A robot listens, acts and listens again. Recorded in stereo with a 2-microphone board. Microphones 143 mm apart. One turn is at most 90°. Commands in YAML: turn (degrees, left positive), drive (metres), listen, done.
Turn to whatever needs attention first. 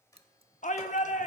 turn: 60
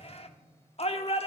turn: 50
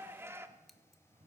turn: -20
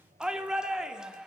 done: "Facing the shout."